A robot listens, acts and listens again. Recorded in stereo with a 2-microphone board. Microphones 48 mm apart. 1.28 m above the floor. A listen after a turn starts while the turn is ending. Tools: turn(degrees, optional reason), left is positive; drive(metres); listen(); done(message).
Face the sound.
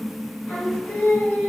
turn(degrees=45, reason="The singing: about 45° left or 135° left.")
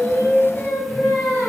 turn(degrees=65, reason="So it is at 65° left.")
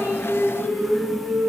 turn(degrees=35, reason="The singing is now 35° left.")
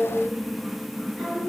turn(degrees=25, reason="The singing is now 25° left.")
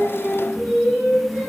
done("Found it: singing, straight ahead, 2 to 4 m away.")